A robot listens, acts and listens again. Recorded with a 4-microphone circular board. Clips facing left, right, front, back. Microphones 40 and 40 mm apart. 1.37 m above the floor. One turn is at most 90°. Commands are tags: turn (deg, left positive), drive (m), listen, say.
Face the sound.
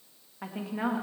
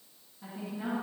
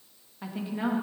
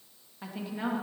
<turn deg="85"/>
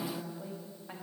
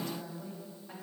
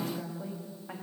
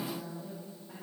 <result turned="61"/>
<turn deg="25"/>
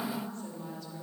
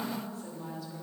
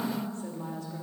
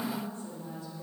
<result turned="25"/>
<say>Found it: a woman speaking, straight ahead.</say>